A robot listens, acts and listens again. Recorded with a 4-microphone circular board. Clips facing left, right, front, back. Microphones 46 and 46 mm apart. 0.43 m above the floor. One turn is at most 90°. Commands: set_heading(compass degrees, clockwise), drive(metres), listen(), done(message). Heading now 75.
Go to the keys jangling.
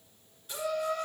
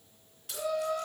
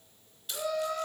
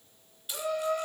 set_heading(165)
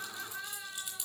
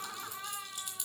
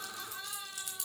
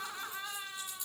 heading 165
drive(1.0)
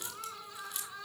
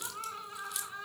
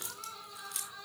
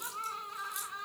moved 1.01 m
drive(1.0)
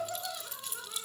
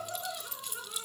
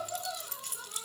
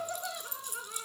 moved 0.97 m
drive(1.0)
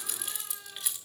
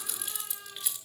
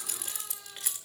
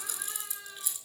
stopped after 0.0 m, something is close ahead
done("Arrived at the keys jangling, straight ahead.")